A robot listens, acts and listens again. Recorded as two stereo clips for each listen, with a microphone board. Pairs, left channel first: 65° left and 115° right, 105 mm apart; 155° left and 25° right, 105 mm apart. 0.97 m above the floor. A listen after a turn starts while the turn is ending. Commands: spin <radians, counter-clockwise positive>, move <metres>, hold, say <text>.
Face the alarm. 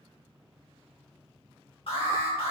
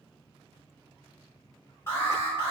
spin 1.66
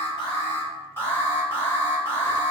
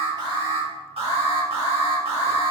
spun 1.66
say Found it: an alarm, straight ahead, 1 to 2 m away.